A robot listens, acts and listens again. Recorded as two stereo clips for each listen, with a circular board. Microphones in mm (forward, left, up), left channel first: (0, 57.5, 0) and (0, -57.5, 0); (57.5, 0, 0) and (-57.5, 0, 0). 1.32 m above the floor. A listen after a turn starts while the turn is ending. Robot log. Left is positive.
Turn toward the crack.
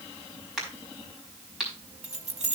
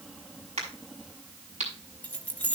note: The crack: 175° right.
cmd yaw -175
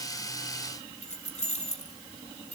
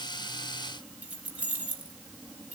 end: I heard a crack from this way, but can't make it out now.